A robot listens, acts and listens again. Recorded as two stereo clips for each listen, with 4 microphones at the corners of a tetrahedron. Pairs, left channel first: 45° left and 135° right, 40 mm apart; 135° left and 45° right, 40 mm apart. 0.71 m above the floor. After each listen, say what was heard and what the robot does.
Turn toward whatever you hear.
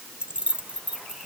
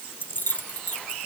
The keys jangling: 170° left. Turn 170° left.
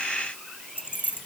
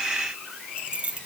The keys jangling is now 20° left. Turn 20° left.
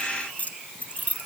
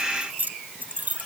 Facing the keys jangling.